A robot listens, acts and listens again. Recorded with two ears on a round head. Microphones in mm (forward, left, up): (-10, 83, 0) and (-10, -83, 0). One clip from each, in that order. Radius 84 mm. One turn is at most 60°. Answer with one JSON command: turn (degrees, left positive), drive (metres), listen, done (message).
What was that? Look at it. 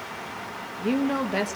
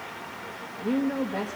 {"turn": 60}
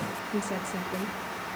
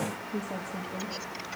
{"turn": 50}
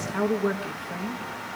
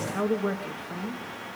{"turn": 10}
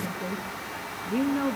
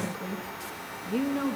{"done": "Found it: a woman speaking, straight ahead, 1 to 2 m away."}